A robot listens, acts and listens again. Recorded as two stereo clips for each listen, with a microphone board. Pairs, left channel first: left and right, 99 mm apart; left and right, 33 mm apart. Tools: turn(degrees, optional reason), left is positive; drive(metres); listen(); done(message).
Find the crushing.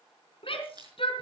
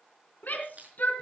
turn(degrees=-45, reason="The crushing: about 45° right or 135° right.")
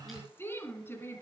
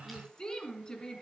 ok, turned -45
listen()
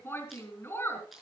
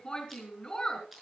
done("Found it: crushing, straight ahead.")